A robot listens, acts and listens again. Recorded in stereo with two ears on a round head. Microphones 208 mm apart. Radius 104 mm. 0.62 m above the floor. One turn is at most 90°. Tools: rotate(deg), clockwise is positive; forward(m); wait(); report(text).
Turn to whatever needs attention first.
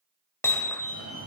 rotate(70)
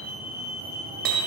rotate(30)
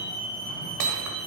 report("Facing the fire alarm, over 4 m away.")